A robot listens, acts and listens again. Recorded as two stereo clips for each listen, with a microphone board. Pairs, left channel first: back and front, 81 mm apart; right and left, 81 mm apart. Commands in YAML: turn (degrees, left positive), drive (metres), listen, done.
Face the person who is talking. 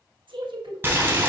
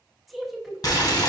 done: "Facing the woman speaking, 1 to 2 m away."